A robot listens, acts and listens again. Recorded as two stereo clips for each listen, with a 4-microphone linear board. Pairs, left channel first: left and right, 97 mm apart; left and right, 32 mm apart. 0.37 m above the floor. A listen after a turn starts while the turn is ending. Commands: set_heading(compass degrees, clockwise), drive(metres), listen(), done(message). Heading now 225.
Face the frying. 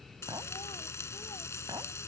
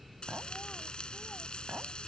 set_heading(195)
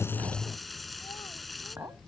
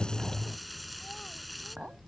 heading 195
done("Found it: frying, straight ahead.")